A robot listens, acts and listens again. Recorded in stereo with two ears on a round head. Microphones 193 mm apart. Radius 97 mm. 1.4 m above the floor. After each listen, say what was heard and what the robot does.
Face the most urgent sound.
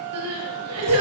Turn 90° right.
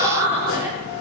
So it is at 10° right. Turn 10° right.
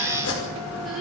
Keep listening.
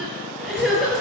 Facing the crying, over 4 m away.